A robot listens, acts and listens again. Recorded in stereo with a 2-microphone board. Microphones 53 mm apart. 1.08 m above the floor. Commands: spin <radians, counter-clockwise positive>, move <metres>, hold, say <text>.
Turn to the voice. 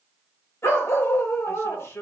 spin 1.05
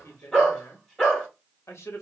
spin 0.96
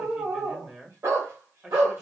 spin -0.26
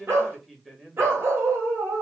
say Facing the man speaking.